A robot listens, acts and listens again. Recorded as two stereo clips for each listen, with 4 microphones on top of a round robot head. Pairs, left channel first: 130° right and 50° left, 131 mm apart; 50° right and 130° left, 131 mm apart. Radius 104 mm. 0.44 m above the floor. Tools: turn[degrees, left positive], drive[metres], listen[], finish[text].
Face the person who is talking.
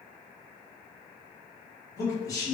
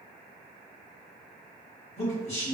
Thought: The man speaking: 70° right.
Action: turn[-70]
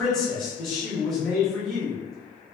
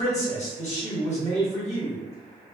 Thought: The man speaking is now 45° right.
Action: turn[-45]
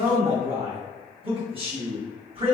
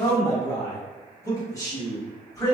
Thought: The man speaking is now 15° left.
Action: turn[15]
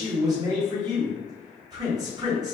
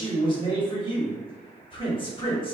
Action: finish[Facing the man speaking.]